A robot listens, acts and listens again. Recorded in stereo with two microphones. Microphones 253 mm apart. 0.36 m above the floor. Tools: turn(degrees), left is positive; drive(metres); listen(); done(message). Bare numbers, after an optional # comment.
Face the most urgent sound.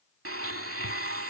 listen()
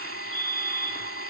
# The fire alarm: about 55° left or 125° left.
turn(55)
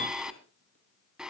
listen()
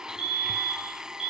# So it is at 25° left.
turn(25)
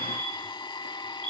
done("Found it: a fire alarm, straight ahead.")